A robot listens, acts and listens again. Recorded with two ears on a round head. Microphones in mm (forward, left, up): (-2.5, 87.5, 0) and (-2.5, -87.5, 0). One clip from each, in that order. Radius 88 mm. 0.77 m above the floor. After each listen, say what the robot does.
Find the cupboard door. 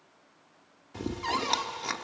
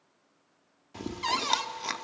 Turn 65° right.
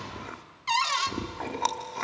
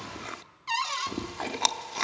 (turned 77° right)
Turn 15° left.
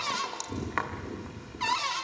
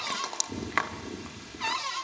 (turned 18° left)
Facing the cupboard door, 1 to 2 m away.